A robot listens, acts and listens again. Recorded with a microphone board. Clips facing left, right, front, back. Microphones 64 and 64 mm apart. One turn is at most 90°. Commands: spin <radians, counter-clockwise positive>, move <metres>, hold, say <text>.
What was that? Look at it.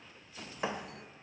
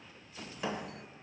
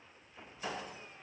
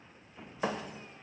spin 1.57
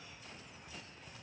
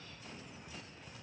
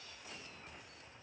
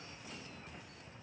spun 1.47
spin 1.13
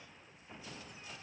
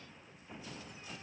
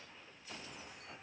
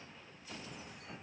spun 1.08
say I heard a thud from this way, but can't make it out now.